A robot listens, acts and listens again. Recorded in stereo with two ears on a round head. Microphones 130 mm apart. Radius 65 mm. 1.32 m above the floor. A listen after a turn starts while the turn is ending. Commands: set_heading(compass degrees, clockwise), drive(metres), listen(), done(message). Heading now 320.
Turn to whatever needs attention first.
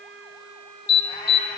set_heading(260)
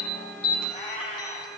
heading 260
done("Found it: an alarm, straight ahead.")